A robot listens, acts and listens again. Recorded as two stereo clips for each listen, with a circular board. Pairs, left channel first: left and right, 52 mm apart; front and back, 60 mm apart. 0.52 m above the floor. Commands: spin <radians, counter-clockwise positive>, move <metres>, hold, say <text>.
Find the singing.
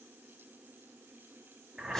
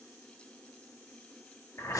hold
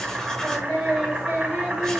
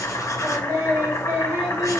spin 2.53
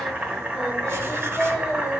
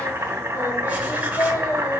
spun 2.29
spin -0.17
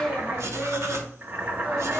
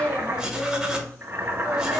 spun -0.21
say Facing the singing, 2 to 4 m away.